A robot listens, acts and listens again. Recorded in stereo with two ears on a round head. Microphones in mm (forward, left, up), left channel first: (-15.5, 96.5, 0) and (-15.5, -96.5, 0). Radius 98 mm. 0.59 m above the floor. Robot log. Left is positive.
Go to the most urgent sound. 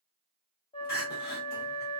note: The crying: about 45° left or 135° left.
cmd yaw +45
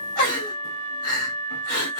note: So it is at 85° left.
cmd yaw +85
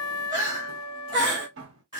note: The crying is now 20° right.
cmd yaw -20
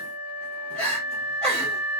cmd fwd 1.0
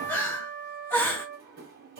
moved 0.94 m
note: The crying is now 10° left.
cmd yaw +10
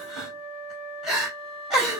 cmd fwd 1.0
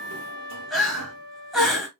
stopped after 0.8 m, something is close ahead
end: I am next to the crying.